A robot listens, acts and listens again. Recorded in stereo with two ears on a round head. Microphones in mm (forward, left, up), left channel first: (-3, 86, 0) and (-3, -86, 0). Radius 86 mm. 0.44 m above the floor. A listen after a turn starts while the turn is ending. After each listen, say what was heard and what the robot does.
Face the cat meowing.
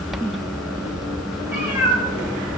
Turn 30° right.
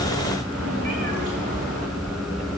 Keep listening.
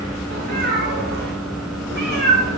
So it is at 120° right. Turn 120° right.
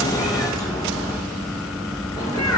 The cat meowing is now 20° left. Turn 20° left.
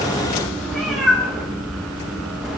Found it: a cat meowing, straight ahead.